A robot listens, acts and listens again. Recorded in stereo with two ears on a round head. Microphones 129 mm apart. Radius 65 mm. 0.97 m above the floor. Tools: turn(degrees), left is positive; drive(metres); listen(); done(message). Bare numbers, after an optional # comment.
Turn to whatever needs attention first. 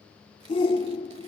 # The shout: about 35° left or 145° left.
turn(35)
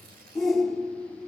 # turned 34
done("Found it: a shout, straight ahead, 1 to 2 m away.")